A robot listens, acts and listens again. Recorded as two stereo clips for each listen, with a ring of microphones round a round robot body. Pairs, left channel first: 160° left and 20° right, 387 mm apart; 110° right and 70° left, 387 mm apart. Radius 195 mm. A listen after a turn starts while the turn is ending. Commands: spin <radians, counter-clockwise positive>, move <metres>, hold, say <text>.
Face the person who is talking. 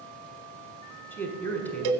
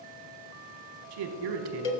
spin 1.31
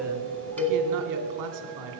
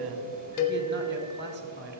spin 0.17
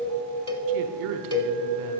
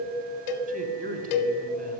say Facing the man speaking.